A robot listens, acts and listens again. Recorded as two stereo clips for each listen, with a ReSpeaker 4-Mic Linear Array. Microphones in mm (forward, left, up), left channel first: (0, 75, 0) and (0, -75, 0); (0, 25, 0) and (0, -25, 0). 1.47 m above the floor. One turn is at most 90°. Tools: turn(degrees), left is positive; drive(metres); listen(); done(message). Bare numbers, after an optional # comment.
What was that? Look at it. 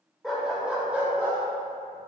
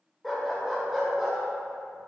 turn(-30)
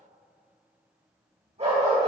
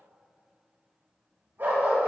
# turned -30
# So it is at 130° right.
turn(-90)
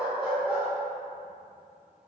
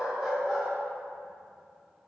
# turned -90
done("Found it: a dog barking, straight ahead.")